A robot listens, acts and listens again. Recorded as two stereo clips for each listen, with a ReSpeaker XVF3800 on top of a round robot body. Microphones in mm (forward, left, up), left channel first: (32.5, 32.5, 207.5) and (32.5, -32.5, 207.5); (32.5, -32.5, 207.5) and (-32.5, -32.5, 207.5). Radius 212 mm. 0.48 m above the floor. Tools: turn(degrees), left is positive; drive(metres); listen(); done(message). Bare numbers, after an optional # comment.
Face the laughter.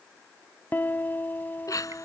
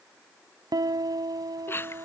# The laughter: 55° left.
turn(55)
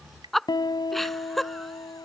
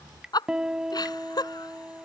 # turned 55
done("Found it: laughter, straight ahead.")